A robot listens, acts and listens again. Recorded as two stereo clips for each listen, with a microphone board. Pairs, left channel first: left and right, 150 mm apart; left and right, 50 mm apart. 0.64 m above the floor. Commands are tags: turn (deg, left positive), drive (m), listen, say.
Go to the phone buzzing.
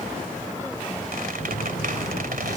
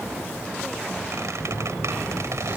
<turn deg="65"/>
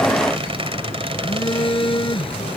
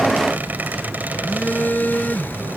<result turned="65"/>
<turn deg="30"/>
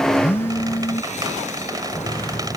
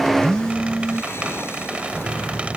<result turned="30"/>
<turn deg="15"/>
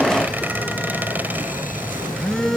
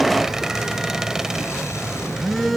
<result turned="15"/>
<drive m="1.0"/>
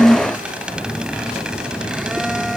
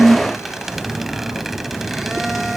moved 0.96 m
<drive m="1.0"/>
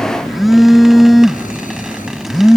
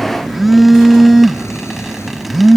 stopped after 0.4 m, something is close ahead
<say>I am next to the phone buzzing.</say>